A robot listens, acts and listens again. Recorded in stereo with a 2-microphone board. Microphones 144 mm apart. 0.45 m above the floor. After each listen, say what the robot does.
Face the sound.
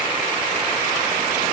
Keep listening.
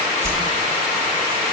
Turn 15° right.
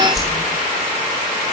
Found it: a whoosh, straight ahead, over 4 m away.